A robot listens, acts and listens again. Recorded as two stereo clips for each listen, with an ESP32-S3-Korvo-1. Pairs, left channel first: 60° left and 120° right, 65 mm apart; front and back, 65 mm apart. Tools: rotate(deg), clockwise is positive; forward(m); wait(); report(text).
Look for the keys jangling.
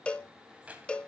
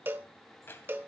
rotate(55)
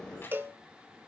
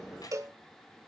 report("Facing the keys jangling, 2 to 4 m away.")